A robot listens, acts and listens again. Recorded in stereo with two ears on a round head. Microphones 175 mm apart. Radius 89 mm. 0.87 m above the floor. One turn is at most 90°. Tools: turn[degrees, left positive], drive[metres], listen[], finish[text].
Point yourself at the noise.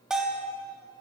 Action: turn[-30]
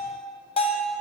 Thought: So it is at 30° left.
Action: turn[30]
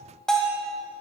Action: finish[Facing the bell.]